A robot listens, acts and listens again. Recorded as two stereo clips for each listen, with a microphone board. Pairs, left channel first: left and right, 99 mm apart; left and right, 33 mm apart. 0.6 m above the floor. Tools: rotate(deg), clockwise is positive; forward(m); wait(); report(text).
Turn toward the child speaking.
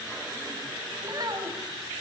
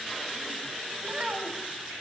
rotate(45)
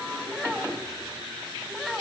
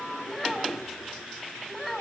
report("Found it: a child speaking, straight ahead.")